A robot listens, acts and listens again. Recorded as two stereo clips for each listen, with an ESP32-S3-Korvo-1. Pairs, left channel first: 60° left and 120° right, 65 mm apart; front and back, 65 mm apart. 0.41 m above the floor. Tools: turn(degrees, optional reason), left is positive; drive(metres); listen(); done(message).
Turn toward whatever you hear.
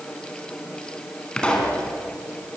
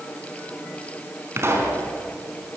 turn(degrees=135, reason="The pop: 135° left.")
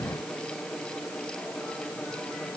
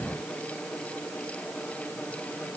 done("I heard a pop from this way, but can't make it out now.")